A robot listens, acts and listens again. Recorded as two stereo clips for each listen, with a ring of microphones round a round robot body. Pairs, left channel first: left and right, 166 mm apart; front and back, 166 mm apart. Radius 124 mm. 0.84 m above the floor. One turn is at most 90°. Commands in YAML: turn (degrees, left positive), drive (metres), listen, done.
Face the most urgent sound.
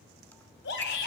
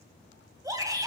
turn: 90
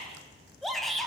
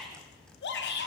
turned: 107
done: "Facing the shout."